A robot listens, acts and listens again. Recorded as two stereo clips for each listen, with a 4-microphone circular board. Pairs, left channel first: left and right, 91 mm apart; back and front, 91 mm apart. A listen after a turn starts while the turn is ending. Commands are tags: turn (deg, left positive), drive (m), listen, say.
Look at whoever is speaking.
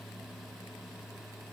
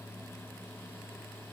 <listen/>
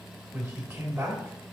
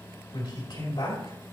<turn deg="-160"/>
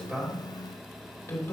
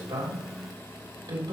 <turn deg="20"/>
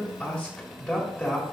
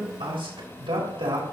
<say>Found it: a man speaking, straight ahead.</say>